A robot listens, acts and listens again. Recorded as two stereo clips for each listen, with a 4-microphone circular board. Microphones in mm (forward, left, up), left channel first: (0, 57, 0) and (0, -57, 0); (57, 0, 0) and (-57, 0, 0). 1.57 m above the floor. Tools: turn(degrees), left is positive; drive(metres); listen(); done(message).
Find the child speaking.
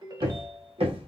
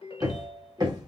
listen()
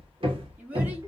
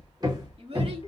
turn(degrees=-165)
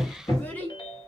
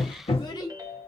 turn(degrees=25)
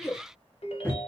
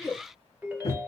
turn(degrees=35)
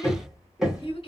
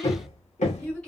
turn(degrees=80)
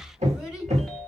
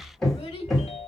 done("Found it: a child speaking, straight ahead, 1 to 2 m away.")